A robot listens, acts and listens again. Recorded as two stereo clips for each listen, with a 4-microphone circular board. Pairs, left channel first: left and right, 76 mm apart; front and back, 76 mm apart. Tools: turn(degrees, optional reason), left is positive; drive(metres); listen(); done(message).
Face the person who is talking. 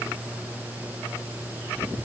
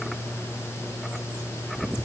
listen()
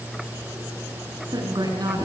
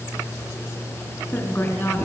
turn(degrees=-60, reason="The woman speaking: 60° right.")
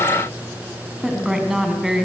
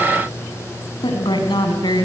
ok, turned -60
done("Found it: a woman speaking, straight ahead.")